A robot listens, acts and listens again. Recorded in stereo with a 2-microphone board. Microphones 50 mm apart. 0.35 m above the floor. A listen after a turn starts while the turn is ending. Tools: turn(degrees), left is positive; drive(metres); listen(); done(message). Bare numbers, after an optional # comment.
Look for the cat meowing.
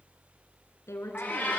# The cat meowing: about 30° left or 150° left.
turn(30)
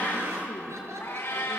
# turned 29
# So it is at 125° left.
turn(125)
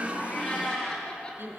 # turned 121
# The cat meowing is now 15° left.
turn(15)
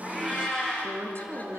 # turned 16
done("Facing the cat meowing.")